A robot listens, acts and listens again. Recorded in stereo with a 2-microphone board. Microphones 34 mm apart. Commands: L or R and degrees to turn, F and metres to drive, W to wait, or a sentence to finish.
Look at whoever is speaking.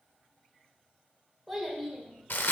L30
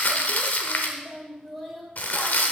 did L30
L30
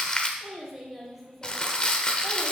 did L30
L30
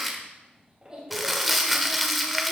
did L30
R25
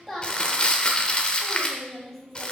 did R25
Found it: a child speaking, straight ahead, 2 to 4 m away.